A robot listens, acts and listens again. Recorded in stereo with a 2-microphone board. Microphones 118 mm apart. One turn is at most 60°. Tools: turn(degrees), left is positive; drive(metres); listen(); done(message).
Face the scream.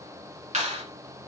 listen()
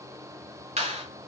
listen()
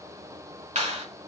done("I can't make out a scream to turn to.")